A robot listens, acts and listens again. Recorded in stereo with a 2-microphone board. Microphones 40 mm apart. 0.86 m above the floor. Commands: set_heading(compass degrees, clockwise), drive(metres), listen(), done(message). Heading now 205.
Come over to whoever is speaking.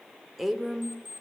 set_heading(235)
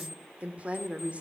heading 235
set_heading(20)
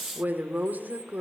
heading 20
set_heading(70)
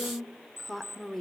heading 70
drive(1.0)
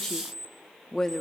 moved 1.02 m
set_heading(55)
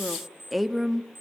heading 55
drive(1.0)
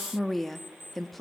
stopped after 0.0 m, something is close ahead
done("Arrived at the woman speaking, straight ahead.")